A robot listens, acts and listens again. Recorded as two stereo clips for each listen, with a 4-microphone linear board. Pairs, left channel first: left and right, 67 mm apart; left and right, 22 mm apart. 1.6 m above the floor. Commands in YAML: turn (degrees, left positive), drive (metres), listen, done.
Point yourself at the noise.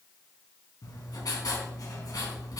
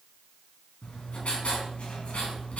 turn: 70
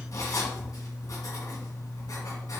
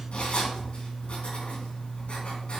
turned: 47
turn: 60
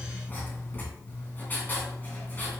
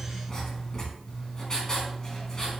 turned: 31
turn: 30
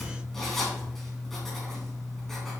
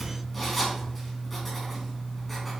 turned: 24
done: "Facing the writing."